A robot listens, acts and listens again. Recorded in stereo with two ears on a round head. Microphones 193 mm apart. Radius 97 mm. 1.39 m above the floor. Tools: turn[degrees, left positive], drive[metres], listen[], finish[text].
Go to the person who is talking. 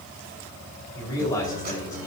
Thought: The man speaking: about 15° left or 165° left.
Action: turn[15]
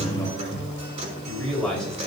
Action: drive[1.0]
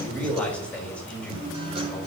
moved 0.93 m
Action: drive[1.0]
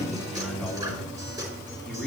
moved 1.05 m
Action: drive[1.0]
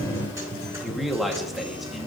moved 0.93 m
Action: drive[1.0]
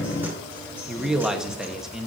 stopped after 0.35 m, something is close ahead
Action: finish[I am next to the man speaking.]